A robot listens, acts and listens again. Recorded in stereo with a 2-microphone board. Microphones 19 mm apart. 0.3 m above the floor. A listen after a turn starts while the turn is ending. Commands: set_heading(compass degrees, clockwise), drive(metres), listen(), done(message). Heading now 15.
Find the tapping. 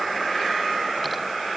listen()
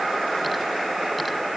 listen()
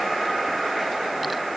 done("I can't make out tapping to turn to.")